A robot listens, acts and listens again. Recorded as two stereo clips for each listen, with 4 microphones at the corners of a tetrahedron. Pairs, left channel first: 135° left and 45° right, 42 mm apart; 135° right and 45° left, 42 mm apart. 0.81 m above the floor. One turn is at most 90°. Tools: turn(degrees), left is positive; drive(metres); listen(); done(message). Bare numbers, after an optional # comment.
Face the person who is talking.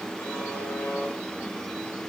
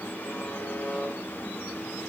listen()
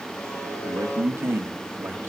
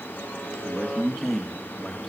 # The man speaking: 50° right.
turn(-50)
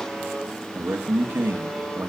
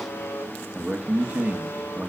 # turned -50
# The man speaking is now 10° right.
turn(-10)
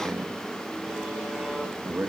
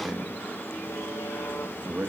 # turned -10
done("Facing the man speaking, 1 to 2 m away.")